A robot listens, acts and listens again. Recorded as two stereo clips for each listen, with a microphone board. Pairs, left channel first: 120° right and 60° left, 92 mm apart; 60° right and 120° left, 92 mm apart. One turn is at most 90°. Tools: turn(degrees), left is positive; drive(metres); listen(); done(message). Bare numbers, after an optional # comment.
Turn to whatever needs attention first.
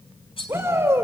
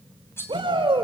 # The shout: 120° left.
turn(90)
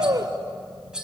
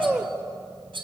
# The shout is now 25° left.
turn(25)
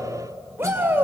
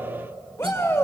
done("Facing the shout.")